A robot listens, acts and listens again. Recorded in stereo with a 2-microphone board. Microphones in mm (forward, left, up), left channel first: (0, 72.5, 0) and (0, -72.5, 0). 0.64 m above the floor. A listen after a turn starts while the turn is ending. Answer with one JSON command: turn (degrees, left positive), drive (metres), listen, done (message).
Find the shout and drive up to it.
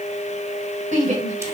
{"turn": -55}
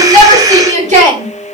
{"turn": -60}
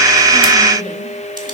{"listen": true}
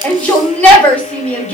{"turn": 10}
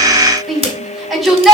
{"drive": 1.0}
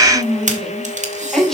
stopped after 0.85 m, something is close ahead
{"done": "Blocked. The shout is further on, straight ahead."}